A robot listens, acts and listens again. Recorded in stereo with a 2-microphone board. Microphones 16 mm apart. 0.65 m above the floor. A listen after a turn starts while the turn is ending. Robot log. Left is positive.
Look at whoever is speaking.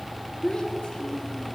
cmd yaw +90
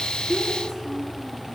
note: So it is at 15° left.
cmd yaw +15
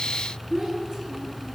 end: Found it: a child speaking, straight ahead.